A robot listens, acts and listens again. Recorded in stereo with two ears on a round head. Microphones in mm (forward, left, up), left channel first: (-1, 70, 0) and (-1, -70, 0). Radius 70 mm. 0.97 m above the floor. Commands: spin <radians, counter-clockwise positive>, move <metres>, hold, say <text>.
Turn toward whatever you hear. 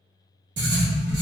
spin -1.57
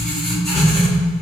say Found it: writing, straight ahead, 1 to 2 m away.